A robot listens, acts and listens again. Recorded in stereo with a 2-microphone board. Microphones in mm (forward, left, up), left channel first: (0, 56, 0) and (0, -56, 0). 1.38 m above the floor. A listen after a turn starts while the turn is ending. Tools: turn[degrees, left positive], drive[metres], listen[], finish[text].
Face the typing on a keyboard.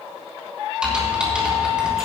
Action: turn[-30]
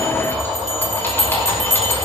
Thought: So it is at 25° left.
Action: turn[25]
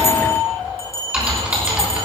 Thought: The typing on a keyboard is now 10° right.
Action: turn[-10]
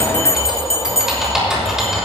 Action: finish[Facing the typing on a keyboard.]